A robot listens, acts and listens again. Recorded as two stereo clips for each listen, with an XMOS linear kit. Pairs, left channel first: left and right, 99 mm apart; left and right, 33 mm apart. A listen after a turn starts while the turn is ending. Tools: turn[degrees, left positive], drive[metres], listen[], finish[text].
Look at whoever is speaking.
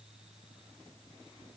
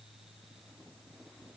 Action: listen[]
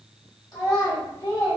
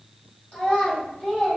Thought: The child speaking: about 40° left or 140° left.
Action: turn[40]
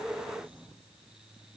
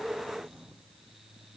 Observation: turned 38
Action: listen[]
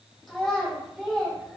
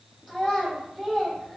Action: finish[Facing the child speaking, 1 to 2 m away.]